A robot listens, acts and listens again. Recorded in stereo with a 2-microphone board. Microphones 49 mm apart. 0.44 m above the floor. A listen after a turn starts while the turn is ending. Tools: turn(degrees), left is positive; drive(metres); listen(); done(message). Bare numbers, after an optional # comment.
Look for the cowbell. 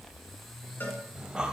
# The cowbell: about 45° left or 135° left.
turn(45)
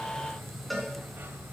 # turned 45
done("Found it: a cowbell, straight ahead.")